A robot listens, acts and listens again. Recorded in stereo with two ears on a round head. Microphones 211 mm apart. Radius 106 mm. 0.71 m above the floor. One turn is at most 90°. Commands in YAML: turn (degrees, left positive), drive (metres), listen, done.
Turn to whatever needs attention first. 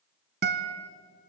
listen: true
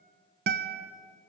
listen: true
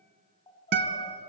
turn: 20
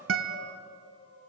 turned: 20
turn: 90
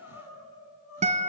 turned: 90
turn: 60
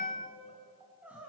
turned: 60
done: "Found it: crying, straight ahead, over 4 m away."